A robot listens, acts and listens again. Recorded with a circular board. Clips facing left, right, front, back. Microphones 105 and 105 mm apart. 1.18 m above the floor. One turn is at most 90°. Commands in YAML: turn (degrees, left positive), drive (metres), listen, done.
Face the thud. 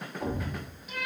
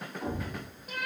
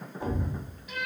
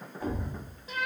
turn: 70
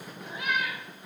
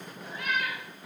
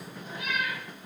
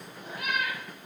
done: "Facing where the thud came from. I can't hear it now."